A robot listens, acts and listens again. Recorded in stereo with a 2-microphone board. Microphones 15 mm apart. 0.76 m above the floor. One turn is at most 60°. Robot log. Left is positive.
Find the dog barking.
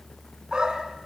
note: The dog barking: about 55° right or 125° right.
cmd yaw -55
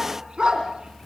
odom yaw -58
note: So it is at 70° right.
cmd yaw -60
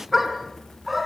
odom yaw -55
note: The dog barking is now 10° right.
cmd yaw -10
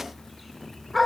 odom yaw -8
end: Facing the dog barking.